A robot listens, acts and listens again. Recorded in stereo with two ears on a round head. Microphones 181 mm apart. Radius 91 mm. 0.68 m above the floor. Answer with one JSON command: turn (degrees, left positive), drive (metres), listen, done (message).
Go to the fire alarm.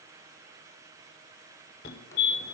{"turn": 55}
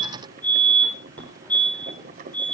{"turn": 10}
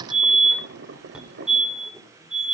{"drive": 1.0}
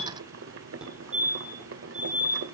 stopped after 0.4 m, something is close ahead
{"done": "Something is in my way. I am facing the fire alarm but have not reached it."}